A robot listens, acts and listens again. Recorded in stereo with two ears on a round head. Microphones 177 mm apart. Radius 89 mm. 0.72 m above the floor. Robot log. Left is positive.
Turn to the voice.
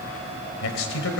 cmd yaw +90
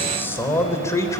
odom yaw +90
note: So it is at 15° left.
cmd yaw +15
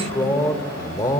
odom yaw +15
note: The man speaking is now 20° left.
cmd yaw +20
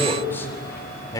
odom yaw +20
note: The man speaking is now 20° left.
cmd yaw +20
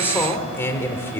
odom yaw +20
note: The man speaking is now 10° left.
cmd yaw +10
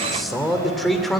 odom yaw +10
end: Facing the man speaking.